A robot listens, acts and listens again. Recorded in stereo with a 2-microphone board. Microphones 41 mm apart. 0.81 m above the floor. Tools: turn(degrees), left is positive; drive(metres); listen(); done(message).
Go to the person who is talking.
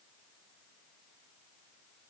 listen()
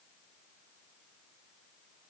listen()
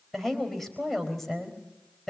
turn(degrees=30)
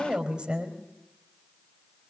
turn(degrees=-20)
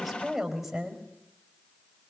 drive(metres=1.0)
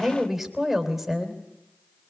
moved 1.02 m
drive(metres=1.0)
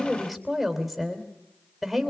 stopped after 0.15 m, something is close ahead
done("Something is in my way. I am facing the woman speaking but have not reached it.")